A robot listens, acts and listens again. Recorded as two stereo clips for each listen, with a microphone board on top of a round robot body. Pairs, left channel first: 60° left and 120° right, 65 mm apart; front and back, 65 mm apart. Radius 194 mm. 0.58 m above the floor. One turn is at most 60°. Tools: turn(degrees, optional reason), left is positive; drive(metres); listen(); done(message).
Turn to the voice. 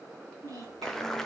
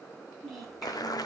turn(degrees=-60, reason="The child speaking: 85° right.")
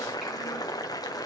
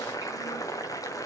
turn(degrees=-25, reason="Nothing new. It was at 25° right.")
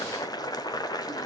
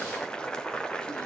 listen()
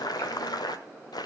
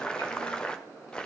done("I heard a child speaking from this way, but can't make it out now.")